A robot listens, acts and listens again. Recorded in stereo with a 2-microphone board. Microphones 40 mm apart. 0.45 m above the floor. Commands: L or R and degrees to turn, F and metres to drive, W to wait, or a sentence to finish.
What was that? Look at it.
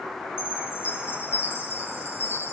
L70
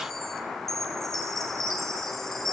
Facing the chime, 2 to 4 m away.